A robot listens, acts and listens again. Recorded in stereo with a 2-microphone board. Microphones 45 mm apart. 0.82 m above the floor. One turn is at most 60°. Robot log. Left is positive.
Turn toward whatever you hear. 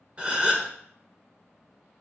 note: The gasp: about 25° right or 155° right.
cmd yaw -25
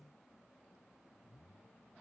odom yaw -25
cmd idle
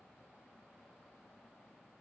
end: I heard a gasp, but can't make it out now. It was about straight ahead or 130° right.